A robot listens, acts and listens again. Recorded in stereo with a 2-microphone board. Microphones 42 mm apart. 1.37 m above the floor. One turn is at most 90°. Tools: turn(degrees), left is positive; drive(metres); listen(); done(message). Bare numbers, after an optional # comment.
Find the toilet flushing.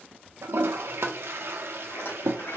# The toilet flushing: about 65° right or 115° right.
turn(-65)
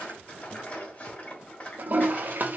# So it is at 45° right.
turn(-45)
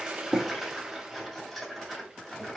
# The toilet flushing is now 15° right.
turn(-15)
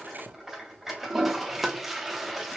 done("Found it: a toilet flushing, straight ahead.")